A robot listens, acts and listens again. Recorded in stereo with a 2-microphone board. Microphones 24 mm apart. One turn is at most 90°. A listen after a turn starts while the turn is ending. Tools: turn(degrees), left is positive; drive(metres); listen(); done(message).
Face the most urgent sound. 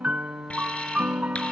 turn(degrees=55)
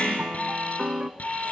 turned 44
turn(degrees=80)
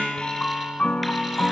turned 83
listen()
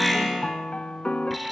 done("Facing the alarm.")